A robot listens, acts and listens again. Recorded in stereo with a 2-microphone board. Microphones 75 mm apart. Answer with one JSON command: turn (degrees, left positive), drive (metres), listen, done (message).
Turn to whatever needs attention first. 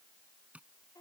{"listen": true}
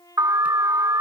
{"turn": -55}
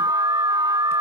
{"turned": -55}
{"turn": -70}
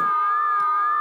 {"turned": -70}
{"done": "Found it: an alarm, straight ahead."}